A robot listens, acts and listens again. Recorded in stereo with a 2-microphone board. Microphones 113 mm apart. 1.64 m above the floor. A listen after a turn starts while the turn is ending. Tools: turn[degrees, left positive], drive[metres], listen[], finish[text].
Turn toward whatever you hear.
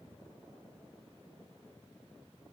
Action: listen[]
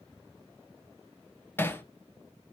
Thought: The hammering: about 20° left or 160° left.
Action: turn[20]
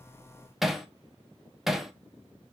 Action: finish[Facing the hammering, 1 to 2 m away.]